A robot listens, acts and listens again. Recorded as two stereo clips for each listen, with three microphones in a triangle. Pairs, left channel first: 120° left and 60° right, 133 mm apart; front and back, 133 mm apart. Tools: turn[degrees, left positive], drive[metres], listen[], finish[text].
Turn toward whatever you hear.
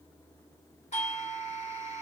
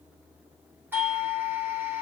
Thought: The doorbell: 105° left.
Action: turn[105]
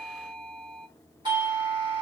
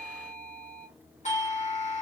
Thought: The doorbell is now 10° right.
Action: turn[-10]
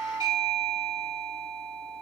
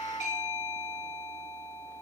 Action: finish[Facing the doorbell.]